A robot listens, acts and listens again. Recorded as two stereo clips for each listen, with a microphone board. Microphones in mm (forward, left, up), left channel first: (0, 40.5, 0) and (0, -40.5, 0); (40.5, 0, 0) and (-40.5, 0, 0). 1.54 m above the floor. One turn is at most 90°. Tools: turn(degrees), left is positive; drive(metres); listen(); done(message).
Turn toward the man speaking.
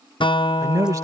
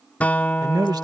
turn(degrees=-90)
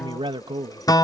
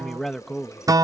turn(degrees=-90)
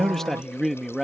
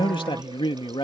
done("Facing the man speaking.")